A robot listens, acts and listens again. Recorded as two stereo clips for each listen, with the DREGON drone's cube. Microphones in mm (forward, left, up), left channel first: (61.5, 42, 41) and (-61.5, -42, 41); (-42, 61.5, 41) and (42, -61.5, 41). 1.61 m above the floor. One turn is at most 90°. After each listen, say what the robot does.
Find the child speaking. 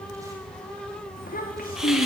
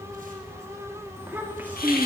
Turn 25° left.
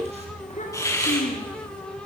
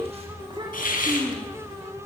Found it: a child speaking, straight ahead.